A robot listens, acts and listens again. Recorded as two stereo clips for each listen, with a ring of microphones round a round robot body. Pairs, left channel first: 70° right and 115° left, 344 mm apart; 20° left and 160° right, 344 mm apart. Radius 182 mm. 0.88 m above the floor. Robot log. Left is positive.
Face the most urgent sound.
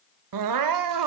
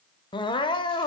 note: The crying: 100° left.
cmd yaw +100
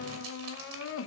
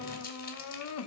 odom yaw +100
note: The crying is now 20° right.
cmd yaw -20
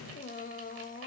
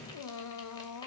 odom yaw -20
end: Found it: crying, straight ahead, under 1 m away.